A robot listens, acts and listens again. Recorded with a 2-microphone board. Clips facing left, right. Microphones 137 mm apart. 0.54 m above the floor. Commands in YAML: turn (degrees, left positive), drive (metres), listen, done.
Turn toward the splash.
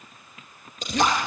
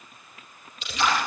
turn: 40
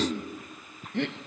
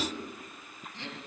listen: true
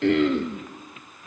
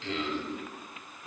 done: "I heard a splash, but can't make it out now. It was about straight ahead or 100° left."